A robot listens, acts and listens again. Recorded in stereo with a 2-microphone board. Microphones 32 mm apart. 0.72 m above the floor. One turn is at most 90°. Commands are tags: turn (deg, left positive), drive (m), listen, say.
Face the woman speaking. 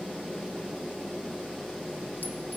<listen/>
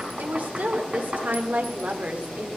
<turn deg="-55"/>
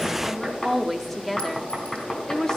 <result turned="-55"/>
<turn deg="20"/>
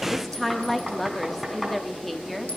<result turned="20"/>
<say>Found it: a woman speaking, straight ahead.</say>